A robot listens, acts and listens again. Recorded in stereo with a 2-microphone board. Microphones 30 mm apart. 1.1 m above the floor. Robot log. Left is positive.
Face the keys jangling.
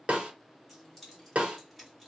cmd yaw -30
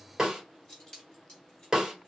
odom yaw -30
note: So it is at 20° left.
cmd yaw +20
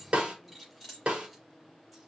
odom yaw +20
end: Facing the keys jangling.